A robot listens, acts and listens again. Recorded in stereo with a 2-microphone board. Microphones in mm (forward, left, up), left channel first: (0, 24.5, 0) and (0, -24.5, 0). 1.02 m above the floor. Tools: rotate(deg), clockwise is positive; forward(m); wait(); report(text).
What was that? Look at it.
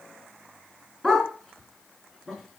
rotate(-30)
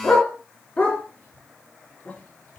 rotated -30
rotate(-140)
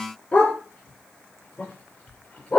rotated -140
rotate(-25)
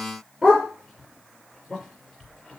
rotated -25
report("Facing the dog barking, over 4 m away.")